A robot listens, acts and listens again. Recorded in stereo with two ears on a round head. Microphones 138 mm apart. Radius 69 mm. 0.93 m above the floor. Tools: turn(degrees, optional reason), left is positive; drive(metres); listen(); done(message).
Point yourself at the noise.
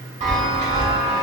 turn(degrees=-50, reason="The chime: about 50° right or 130° right.")
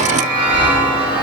turn(degrees=-10, reason="So it is at 10° right.")
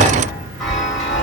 done("Facing the chime, 1 to 2 m away.")